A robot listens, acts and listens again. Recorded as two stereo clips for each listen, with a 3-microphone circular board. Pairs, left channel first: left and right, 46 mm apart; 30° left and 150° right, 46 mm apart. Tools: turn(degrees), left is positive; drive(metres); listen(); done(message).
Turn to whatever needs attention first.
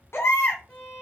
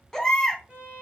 turn(degrees=110)
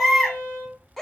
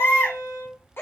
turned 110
turn(degrees=10)
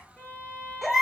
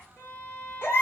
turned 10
done("Facing the baby crying, under 1 m away.")